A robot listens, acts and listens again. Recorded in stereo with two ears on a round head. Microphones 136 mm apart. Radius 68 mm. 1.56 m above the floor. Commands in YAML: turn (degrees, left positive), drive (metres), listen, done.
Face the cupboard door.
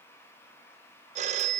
listen: true
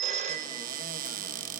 turn: -65
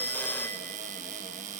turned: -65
turn: -50
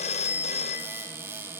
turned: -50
turn: -15
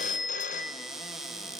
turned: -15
done: "Facing the cupboard door."